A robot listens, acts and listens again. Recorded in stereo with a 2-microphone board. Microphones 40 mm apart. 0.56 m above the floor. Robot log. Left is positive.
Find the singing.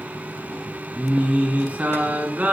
note: The singing: about 40° right or 140° right.
cmd yaw -40
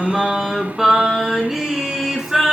end: Facing the singing, over 4 m away.